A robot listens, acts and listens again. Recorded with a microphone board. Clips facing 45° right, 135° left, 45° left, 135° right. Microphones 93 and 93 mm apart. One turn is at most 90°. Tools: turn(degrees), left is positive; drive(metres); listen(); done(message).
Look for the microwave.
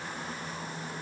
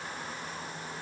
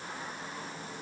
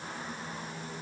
listen()
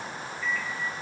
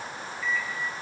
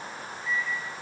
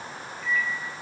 turn(degrees=-90)
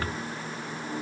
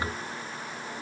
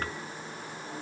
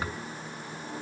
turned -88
turn(degrees=-50)
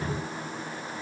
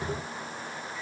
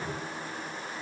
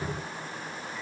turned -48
listen()
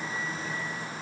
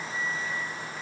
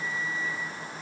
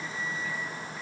done("Found it: a microwave, straight ahead.")